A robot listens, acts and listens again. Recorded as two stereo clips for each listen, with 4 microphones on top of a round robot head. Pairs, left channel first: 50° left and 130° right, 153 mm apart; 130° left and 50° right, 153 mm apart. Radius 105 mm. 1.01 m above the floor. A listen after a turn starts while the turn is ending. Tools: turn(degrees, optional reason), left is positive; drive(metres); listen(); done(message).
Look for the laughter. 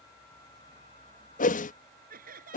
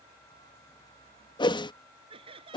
turn(degrees=-105, reason="The laughter: 105° right.")
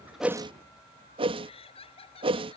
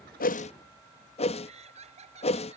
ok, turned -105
done("Found it: laughter, straight ahead.")